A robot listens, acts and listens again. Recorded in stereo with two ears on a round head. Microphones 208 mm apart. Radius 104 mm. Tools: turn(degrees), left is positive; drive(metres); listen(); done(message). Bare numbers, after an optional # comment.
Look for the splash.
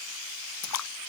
turn(90)
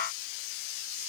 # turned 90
done("I heard a splash from this way, but can't make it out now.")